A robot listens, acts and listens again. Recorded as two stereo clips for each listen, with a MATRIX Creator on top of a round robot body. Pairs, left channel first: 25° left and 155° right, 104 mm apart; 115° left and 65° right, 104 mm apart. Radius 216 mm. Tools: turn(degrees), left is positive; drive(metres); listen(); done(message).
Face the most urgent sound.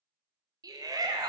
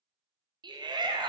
turn(degrees=-105)
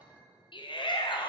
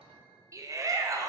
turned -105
turn(degrees=-10)
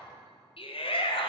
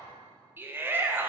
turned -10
done("Found it: a shout, straight ahead, 1 to 2 m away.")